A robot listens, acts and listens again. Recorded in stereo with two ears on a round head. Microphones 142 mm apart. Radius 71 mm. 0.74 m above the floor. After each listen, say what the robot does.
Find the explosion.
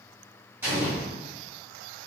Turn 30° right.
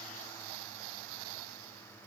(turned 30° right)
Keep listening.
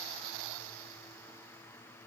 I heard an explosion, but can't make it out now. It was about 20° left or 140° right.